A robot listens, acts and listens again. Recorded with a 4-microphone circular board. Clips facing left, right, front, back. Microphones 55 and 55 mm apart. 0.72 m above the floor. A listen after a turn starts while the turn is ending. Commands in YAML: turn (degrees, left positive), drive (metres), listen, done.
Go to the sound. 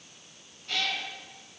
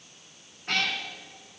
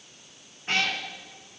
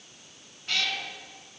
turn: -55
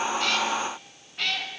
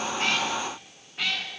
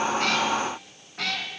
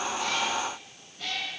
drive: 1.0
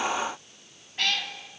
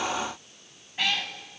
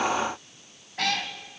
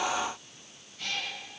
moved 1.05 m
turn: -10
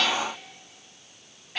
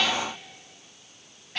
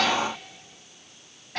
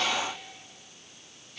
drive: 1.0
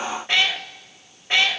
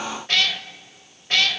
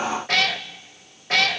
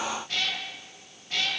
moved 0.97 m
turn: 20
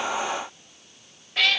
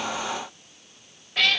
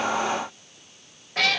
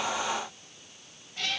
drive: 1.0
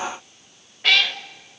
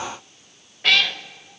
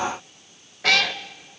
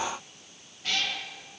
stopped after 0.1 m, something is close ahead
done: "I am next to the cat meowing."